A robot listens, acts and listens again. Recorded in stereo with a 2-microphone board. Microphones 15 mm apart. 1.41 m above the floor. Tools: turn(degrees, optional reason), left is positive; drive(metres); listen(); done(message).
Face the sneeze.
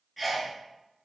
turn(degrees=-30)
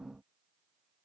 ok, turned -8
listen()
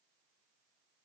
done("I heard a sneeze, but can't make it out now. It was about straight ahead or 165° right.")